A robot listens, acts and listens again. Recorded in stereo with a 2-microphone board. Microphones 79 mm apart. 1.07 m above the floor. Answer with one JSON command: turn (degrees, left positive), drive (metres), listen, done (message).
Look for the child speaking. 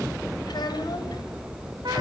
{"turn": 65}
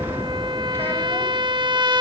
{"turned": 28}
{"listen": true}
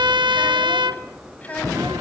{"turn": 20}
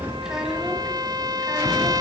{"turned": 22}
{"listen": true}
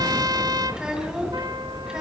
{"turn": -10}
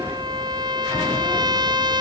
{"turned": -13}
{"listen": true}
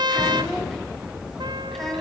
{"done": "Found it: a child speaking, straight ahead."}